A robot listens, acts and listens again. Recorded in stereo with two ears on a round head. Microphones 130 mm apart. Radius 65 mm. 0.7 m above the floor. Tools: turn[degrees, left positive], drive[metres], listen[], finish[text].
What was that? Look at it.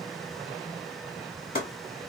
Thought: The chopping: about 40° left or 140° left.
Action: turn[40]
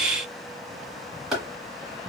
Action: finish[Found it: chopping, straight ahead, 2 to 4 m away.]